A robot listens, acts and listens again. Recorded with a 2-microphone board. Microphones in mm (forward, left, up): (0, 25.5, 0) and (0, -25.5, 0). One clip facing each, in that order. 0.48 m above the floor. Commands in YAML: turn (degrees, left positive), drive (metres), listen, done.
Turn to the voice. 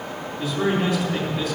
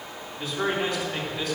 turn: 30
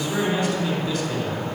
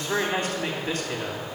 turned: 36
turn: -35
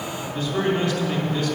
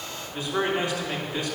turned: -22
turn: -15
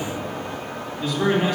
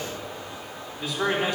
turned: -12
done: "Facing the man speaking."